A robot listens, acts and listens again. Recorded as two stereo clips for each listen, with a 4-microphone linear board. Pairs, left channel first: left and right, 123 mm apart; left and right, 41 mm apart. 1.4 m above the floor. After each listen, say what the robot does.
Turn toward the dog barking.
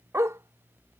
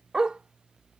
Turn 25° right.
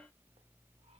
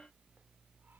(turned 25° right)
Keep listening.
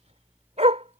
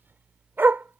Turn 110° right.
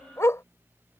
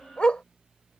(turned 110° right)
Turn 25° left.
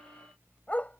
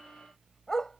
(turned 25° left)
Turn 10° left.
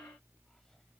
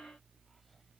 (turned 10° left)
Keep listening.
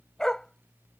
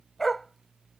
Found it: a dog barking, straight ahead.